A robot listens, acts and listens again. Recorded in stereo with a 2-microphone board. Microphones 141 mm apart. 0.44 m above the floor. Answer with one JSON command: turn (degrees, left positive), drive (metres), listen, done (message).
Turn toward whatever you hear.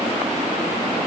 {"listen": true}
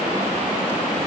{"listen": true}
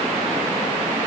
{"done": "I can't make out anything."}